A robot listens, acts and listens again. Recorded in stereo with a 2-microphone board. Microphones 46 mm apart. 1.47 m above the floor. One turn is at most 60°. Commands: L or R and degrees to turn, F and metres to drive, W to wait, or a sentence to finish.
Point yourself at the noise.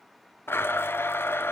L60
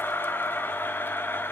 L55
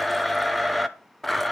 Facing the blender, under 1 m away.